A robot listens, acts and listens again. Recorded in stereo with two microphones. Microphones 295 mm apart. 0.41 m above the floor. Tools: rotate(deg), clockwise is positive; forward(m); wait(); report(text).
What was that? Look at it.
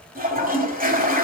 rotate(30)
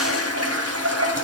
rotate(115)
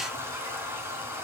rotate(10)
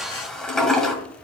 report("Found it: a toilet flushing, straight ahead.")